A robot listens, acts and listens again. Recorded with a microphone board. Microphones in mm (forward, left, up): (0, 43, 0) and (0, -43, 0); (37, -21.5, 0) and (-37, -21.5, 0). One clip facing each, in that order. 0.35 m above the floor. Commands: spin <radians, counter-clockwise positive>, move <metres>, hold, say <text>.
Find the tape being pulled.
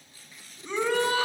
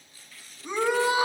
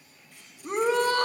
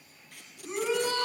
spin 2.79
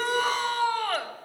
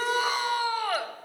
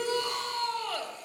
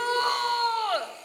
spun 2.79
hold
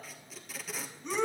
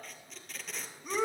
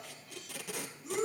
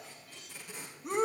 say Facing the tape being pulled.